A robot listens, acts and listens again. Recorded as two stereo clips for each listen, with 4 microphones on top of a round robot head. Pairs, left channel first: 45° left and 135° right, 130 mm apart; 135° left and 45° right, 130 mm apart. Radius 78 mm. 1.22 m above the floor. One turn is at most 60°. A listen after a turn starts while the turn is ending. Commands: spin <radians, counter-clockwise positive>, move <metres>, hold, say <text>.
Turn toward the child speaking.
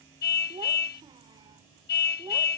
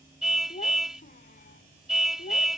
spin 1.05
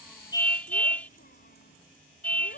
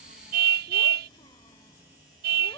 spin 1.05
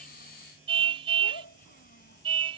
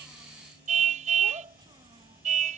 spin 0.26
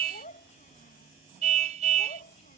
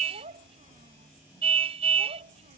say Found it: a child speaking, straight ahead.